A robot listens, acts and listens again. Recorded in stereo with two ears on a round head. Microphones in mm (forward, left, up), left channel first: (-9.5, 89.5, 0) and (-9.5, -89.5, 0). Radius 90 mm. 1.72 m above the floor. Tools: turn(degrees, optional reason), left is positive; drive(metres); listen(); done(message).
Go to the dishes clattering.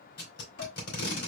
turn(degrees=60, reason="The dishes clattering: about 60° left or 120° left.")
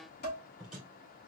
turn(degrees=50, reason="So it is at 50° left.")
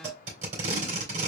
turn(degrees=15, reason="The dishes clattering is now 15° left.")
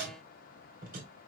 listen()
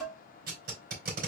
drive(metres=1.0)
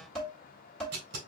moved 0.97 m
drive(metres=1.0)
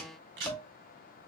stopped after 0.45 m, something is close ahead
done("Arrived at the dishes clattering, straight ahead.")